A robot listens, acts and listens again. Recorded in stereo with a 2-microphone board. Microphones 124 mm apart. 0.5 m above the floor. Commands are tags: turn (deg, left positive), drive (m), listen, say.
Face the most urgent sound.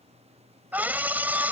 <turn deg="-30"/>
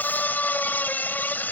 <turn deg="15"/>
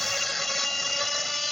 <say>Facing the scream.</say>